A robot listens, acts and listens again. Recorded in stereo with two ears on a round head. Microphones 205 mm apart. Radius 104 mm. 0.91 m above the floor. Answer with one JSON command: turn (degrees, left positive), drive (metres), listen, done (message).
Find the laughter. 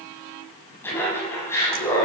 {"turn": 30}
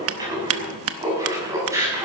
{"turn": -10}
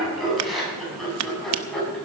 {"done": "Found it: laughter, straight ahead."}